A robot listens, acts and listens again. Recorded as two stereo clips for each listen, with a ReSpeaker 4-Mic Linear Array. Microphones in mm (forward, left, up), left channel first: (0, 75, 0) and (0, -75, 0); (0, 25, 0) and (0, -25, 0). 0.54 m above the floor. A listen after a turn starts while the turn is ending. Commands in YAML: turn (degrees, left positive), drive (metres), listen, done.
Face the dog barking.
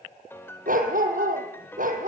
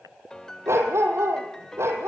turn: -90
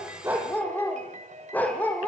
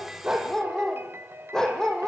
turn: 10
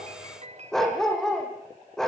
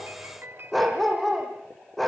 done: "Facing the dog barking."